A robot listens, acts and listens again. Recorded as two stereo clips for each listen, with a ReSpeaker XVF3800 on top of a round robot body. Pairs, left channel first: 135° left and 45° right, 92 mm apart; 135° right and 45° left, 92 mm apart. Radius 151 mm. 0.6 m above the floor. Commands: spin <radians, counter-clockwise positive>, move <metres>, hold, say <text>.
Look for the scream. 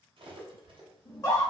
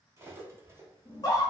spin 3.14
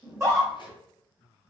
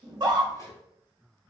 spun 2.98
say Found it: a scream, straight ahead.